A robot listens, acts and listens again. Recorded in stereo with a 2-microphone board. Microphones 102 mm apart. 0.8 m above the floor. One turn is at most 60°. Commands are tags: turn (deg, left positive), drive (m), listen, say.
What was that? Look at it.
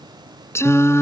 <turn deg="25"/>
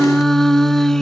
<say>Facing the singing.</say>